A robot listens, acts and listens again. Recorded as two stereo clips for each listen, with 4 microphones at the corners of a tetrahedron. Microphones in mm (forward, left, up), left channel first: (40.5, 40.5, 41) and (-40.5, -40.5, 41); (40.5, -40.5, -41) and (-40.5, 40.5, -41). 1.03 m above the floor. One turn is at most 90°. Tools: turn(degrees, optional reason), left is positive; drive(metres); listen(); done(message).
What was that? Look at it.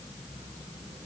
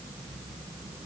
listen()
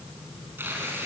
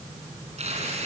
turn(degrees=90, reason="The tearing paper: 155° left.")
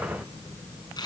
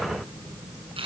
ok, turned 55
turn(degrees=90, reason="The tearing paper is now 100° left.")
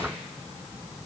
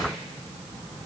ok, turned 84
turn(degrees=15, reason="Nothing new. It was at 15° left.")
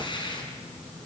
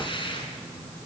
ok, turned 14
done("Facing the tearing paper.")